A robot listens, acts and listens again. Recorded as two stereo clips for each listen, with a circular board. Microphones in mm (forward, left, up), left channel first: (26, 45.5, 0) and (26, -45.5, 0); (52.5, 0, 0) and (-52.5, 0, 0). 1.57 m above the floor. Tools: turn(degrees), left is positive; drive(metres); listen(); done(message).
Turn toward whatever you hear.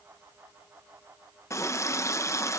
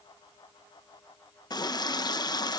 turn(degrees=40)
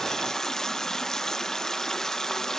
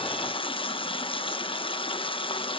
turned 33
done("Facing the running tap.")